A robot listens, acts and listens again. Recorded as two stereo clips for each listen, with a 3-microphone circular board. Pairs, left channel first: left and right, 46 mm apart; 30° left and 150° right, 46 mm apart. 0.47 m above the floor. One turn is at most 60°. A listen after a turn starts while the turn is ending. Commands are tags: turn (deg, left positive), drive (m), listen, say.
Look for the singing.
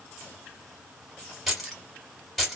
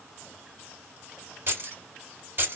<listen/>
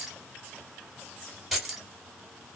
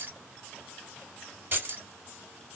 <listen/>
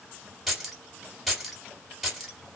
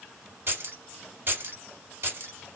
<say>I can't make out singing, only keys jangling.</say>